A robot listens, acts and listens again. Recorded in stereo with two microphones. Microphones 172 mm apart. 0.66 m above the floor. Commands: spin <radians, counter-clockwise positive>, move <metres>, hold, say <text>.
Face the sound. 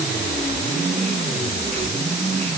hold
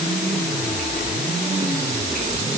hold
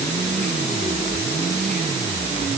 say I can't make out anything.